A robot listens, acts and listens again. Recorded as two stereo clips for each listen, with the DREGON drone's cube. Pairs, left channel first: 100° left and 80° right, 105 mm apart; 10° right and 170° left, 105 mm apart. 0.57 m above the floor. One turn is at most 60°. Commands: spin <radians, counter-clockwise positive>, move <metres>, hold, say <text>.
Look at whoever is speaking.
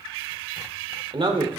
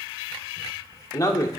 spin -1.05
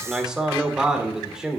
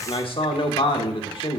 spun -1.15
say Found it: a man speaking, straight ahead, 1 to 2 m away.